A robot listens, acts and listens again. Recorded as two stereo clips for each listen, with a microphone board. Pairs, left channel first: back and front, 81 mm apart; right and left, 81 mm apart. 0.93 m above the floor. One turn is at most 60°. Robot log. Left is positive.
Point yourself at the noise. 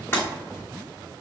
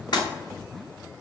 note: The breaking glass: 120° right.
cmd yaw -60
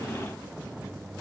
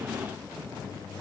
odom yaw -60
note: Nothing new. It was at 60° right.
cmd yaw -60
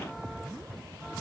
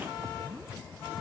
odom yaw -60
end: I heard breaking glass from this way, but can't make it out now.